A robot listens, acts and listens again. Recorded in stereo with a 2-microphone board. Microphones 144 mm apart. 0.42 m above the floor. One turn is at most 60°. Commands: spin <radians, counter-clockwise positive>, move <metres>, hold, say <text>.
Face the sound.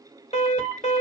spin 0.79
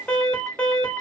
spin 0.17
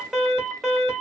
say Facing the alarm.